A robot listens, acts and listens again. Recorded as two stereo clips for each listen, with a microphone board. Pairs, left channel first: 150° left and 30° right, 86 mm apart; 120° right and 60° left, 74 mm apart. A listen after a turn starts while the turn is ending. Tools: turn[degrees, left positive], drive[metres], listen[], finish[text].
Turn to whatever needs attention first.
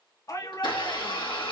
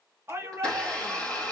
Thought: The shout: 110° left.
Action: turn[110]
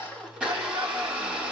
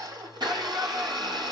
Action: listen[]
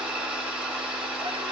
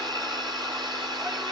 Action: listen[]
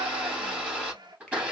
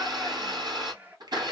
Action: finish[Facing where the shout came from. I can't hear it now.]